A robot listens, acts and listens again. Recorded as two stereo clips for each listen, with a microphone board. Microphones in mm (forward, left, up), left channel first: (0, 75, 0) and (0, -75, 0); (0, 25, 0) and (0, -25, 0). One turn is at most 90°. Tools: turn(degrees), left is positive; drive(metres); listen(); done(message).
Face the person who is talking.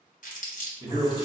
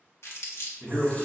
turn(degrees=-35)
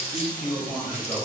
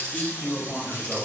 done("Found it: a man speaking, straight ahead.")